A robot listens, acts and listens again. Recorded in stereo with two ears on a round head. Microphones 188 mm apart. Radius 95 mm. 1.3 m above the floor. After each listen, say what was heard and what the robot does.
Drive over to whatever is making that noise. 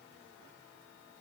Keep listening.
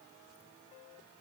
Keep listening.
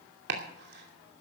The chopping: about 50° right or 130° right. Turn 50° right.
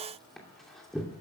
Drive 1.0 m forward.
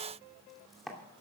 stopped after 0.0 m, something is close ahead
Something is in my way. I am facing the chopping but have not reached it.